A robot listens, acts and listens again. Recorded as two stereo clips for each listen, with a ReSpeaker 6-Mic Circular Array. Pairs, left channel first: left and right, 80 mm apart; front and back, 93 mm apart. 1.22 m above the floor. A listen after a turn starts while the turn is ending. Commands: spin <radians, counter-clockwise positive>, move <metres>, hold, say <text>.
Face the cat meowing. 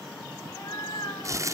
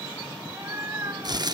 spin 2.01
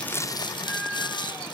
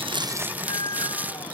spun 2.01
spin -0.26
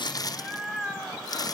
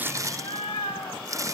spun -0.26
say Found it: a cat meowing, straight ahead, 2 to 4 m away.